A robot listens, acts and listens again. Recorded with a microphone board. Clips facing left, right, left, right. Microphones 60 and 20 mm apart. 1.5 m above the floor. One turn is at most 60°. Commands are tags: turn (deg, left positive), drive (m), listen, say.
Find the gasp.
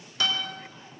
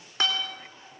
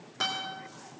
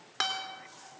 <listen/>
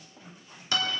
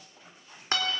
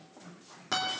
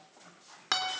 <listen/>
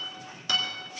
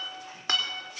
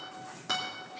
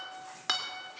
<say>I can't make out a gasp, only a guitar.</say>